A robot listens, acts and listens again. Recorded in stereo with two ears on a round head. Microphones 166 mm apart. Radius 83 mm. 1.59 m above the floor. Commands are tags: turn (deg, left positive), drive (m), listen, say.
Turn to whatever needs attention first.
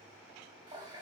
<listen/>
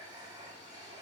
<listen/>
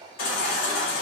<turn deg="55"/>
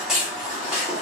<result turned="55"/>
<say>Found it: a baby crying, straight ahead.</say>